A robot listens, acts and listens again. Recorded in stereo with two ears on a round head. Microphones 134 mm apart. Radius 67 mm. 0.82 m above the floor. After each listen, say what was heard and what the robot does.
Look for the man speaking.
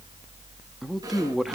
Turn 30° left.
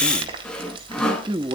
So it is at 35° right. Turn 35° right.
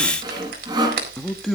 Facing the man speaking, 1 to 2 m away.